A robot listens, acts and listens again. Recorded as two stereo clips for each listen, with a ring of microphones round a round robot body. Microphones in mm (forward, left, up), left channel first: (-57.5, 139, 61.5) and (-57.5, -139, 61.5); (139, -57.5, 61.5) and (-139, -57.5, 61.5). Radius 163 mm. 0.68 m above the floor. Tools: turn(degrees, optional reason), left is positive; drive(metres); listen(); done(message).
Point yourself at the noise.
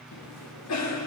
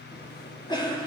turn(degrees=75, reason="The cough: 75° left.")
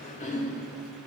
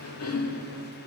turn(degrees=25, reason="The cough is now 25° left.")
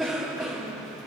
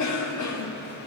done("Found it: a cough, straight ahead.")